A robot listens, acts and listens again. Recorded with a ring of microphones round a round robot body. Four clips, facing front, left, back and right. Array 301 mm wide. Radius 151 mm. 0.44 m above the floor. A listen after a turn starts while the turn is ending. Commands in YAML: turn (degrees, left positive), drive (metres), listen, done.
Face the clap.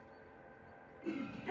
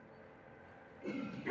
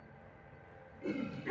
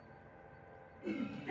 listen: true
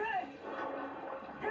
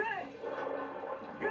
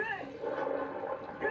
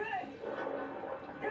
listen: true
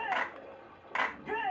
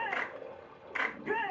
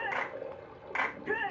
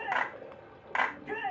turn: -100
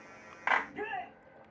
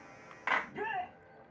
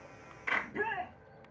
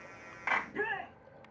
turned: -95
turn: -10
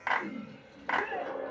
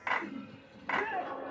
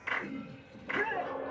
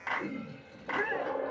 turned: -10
done: "Facing the clap, 2 to 4 m away."